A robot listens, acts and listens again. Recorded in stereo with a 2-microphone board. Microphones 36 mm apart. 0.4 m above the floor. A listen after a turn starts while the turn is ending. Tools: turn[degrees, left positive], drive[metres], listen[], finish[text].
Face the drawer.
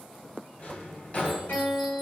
Thought: The drawer: about 45° left or 135° left.
Action: turn[45]
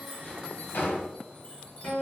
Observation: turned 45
Thought: So it is at 90° left.
Action: turn[90]
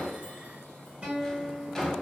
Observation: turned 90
Thought: The drawer is now 15° left.
Action: turn[15]
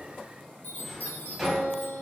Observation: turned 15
Action: finish[Facing the drawer, under 1 m away.]